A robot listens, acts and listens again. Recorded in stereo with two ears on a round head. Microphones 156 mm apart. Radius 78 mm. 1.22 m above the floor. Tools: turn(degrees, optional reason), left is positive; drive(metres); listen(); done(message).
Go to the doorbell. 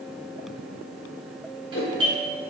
turn(degrees=-30, reason="The doorbell: about 30° right or 150° right.")
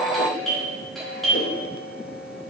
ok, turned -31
drive(metres=1.0)
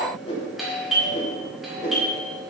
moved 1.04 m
drive(metres=1.0)
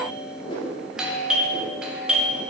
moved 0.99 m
drive(metres=1.0)
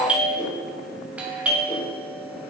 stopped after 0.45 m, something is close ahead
turn(degrees=-10, reason="The doorbell is now 10° right.")
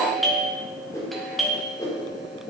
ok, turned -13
done("I am next to the doorbell.")